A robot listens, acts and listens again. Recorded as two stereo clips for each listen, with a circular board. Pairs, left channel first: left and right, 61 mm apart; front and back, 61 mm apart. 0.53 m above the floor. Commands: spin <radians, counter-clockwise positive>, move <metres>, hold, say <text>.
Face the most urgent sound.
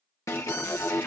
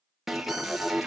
spin 1.66
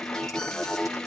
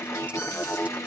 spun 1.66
spin 0.17
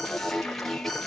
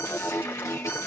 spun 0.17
say Facing the alarm, 1 to 2 m away.